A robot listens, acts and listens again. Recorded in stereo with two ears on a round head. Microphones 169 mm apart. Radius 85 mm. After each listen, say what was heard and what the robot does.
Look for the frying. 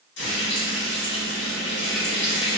The frying: about 60° left or 120° left. Turn 60° left.
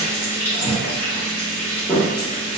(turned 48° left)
So it is at 10° left. Turn 10° left.
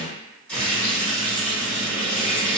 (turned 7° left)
Facing the frying.